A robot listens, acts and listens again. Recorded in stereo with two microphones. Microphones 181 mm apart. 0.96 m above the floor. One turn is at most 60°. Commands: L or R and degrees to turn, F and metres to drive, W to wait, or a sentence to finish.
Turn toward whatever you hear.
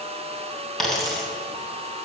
L30
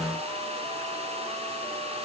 W
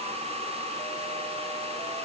I heard a dropped coin, but can't make it out now. It was about 30° right or 150° left.